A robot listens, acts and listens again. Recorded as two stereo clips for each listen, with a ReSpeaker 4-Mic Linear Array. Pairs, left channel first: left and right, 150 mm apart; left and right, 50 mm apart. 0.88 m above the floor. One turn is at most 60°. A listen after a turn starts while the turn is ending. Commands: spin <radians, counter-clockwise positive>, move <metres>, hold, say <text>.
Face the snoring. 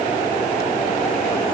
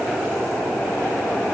hold
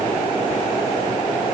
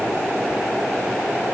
hold
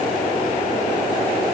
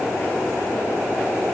say I can't make out snoring.